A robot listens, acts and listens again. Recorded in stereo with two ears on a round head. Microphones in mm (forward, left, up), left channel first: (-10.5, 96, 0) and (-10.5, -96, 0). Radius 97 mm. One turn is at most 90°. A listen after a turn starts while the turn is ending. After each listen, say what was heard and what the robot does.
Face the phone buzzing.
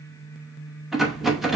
Keep listening.
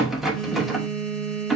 Turn 30° left.
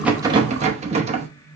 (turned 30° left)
Keep listening.
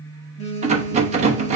So it is at 145° left. Turn 90° left.
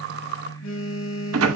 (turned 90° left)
The phone buzzing is now 85° left. Turn 85° left.
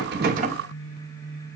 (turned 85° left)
Keep listening.
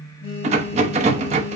The phone buzzing is now 30° left. Turn 30° left.
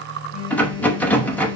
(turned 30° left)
The phone buzzing is now 10° right. Turn 10° right.
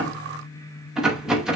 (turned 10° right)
Keep listening.
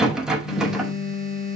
Facing the phone buzzing.